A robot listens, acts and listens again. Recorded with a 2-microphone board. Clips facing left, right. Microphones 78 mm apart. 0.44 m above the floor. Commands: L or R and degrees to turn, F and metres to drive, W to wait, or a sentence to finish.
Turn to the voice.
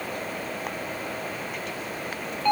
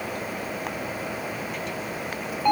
W
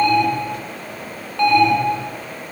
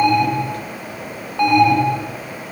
W
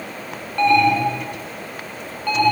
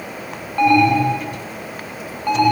I can't make out anyone speaking, only an alarm.